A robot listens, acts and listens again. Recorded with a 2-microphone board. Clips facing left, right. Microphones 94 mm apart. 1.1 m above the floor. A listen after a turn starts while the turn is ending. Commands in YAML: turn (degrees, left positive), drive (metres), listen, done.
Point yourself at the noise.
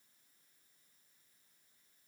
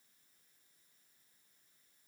listen: true
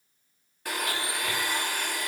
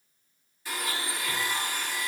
turn: 60
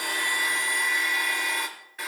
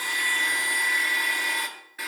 done: "Facing the blender."